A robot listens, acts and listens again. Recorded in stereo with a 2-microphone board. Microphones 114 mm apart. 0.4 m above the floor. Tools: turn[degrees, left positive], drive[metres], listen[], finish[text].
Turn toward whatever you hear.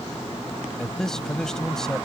Action: turn[30]
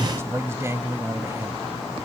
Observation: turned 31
Thought: So it is at 25° right.
Action: turn[-25]
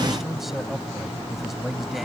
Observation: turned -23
Action: finish[Found it: a man speaking, straight ahead.]